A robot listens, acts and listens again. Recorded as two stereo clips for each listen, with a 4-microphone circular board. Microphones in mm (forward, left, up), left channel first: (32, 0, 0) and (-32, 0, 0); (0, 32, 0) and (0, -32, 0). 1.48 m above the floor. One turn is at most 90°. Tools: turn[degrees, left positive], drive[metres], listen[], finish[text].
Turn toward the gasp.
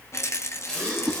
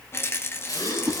Thought: The gasp: 80° left.
Action: turn[80]
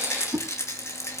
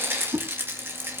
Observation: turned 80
Action: finish[Facing where the gasp came from. I can't hear it now.]